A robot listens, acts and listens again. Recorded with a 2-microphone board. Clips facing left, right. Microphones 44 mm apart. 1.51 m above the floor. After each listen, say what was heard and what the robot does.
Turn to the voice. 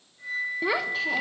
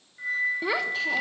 Turn 30° left.
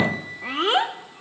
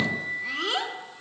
So it is at 145° left. Turn 145° left.
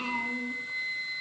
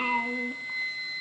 The child speaking is now 25° right. Turn 25° right.
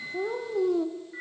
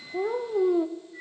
The child speaking is now 15° right. Turn 15° right.
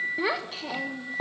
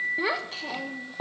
Facing the child speaking, 1 to 2 m away.